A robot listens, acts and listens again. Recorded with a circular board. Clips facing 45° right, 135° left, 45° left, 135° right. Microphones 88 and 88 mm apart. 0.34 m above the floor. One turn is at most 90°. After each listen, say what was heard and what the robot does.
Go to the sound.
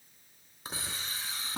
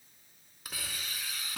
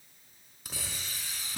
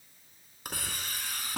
The hiss: 105° right. Turn 90° right.
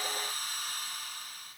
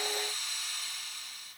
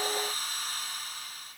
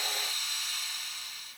Drive 1.0 m forward.
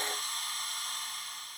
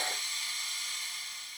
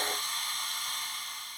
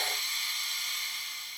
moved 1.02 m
Drive 1.0 m forward.
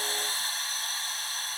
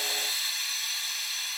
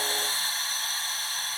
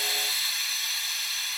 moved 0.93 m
Drive 1.0 m forward.
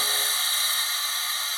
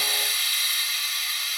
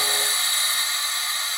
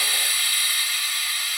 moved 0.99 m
Drive 1.0 m forward.
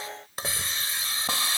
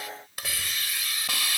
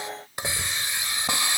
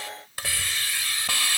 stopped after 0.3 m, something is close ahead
The hiss is now 10° right. Turn 10° right.
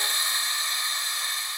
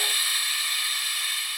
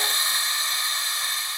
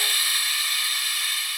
Arrived at the hiss, straight ahead.